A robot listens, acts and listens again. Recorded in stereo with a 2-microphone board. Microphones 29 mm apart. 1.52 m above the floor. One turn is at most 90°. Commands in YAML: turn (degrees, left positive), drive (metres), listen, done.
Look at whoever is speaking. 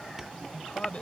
turn: 40
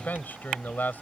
turn: 90
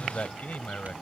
turn: 50
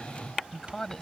turn: 15
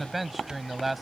done: "Facing the man speaking."